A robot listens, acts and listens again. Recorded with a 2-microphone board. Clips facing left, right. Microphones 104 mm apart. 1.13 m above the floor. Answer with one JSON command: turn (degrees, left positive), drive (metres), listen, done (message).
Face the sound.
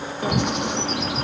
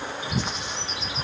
{"turn": 65}
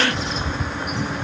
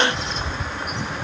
{"done": "Found it: a bird, straight ahead, 1 to 2 m away."}